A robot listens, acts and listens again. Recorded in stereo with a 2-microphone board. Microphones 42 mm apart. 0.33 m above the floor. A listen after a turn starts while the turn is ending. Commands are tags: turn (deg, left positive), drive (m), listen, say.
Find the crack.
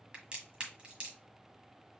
<turn deg="-25"/>
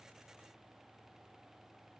<listen/>
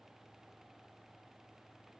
<say>I heard a crack, but can't make it out now. It was about straight ahead or 130° right.</say>